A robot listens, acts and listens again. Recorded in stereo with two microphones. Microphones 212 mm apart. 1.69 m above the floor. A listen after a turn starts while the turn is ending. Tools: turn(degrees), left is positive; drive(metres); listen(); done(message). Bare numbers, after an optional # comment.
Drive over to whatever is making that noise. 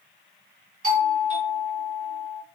# The doorbell: about 35° right or 145° right.
turn(-35)
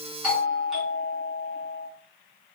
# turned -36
drive(1.0)
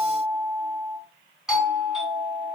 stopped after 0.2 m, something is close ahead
done("Blocked. The doorbell is further on, straight ahead.")